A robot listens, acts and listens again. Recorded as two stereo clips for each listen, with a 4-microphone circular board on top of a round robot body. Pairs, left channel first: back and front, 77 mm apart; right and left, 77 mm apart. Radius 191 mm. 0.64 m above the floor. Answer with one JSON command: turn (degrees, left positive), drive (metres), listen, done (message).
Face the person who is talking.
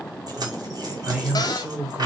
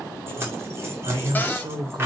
{"turn": 70}
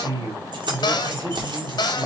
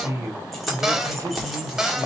{"turn": 40}
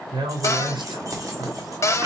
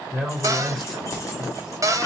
{"done": "Facing the man speaking."}